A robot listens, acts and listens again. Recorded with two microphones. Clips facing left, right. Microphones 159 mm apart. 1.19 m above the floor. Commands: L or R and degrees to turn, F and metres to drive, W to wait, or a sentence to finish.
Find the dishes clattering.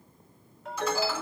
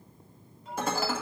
R50
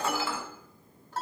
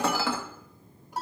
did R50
R80
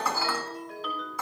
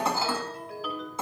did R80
R25
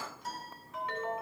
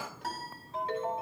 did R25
W
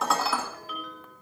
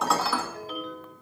Facing the dishes clattering, 2 to 4 m away.